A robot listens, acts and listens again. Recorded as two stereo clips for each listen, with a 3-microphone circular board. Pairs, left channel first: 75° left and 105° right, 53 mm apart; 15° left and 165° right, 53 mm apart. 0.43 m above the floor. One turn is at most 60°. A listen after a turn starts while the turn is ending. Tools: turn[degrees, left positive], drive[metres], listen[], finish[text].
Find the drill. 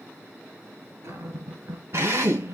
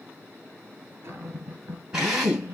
Thought: The drill: 90° right.
Action: turn[-60]
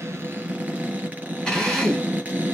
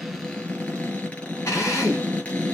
Action: finish[Found it: a drill, straight ahead, 2 to 4 m away.]